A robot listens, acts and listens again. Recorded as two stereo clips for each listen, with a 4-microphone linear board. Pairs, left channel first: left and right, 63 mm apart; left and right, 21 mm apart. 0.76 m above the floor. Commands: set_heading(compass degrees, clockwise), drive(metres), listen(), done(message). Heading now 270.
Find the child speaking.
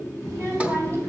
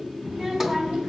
set_heading(330)
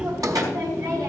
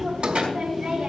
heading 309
set_heading(24)
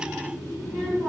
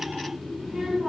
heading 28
set_heading(18)
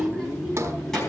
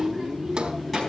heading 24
done("Found it: a child speaking, straight ahead, over 4 m away.")